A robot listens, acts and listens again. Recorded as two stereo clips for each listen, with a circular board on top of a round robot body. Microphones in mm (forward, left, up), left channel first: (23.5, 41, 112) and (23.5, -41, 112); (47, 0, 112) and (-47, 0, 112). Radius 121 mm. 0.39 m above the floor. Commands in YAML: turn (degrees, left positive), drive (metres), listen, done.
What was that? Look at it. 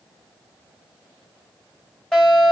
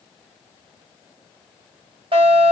turn: 170
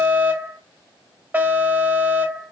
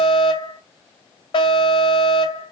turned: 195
turn: -25
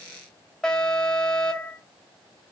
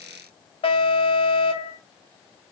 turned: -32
turn: 10
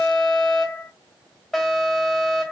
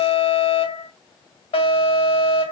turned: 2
done: "Facing the alarm, 2 to 4 m away."